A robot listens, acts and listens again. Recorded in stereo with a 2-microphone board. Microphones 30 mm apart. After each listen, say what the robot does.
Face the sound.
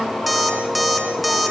Turn 30° left.
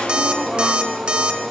Turn 30° right.
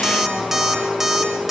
Turn 10° right.
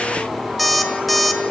Facing the alarm clock, 2 to 4 m away.